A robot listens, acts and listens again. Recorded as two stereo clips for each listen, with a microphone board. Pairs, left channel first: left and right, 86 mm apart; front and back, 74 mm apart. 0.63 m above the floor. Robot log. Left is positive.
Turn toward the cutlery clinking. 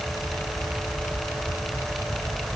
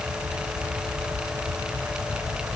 cmd idle
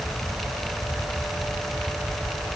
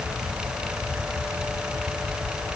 cmd idle
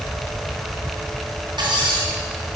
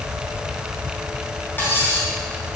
note: The cutlery clinking: 65° right.
cmd yaw -65
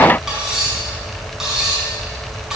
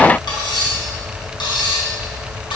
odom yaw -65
end: Facing the cutlery clinking, over 4 m away.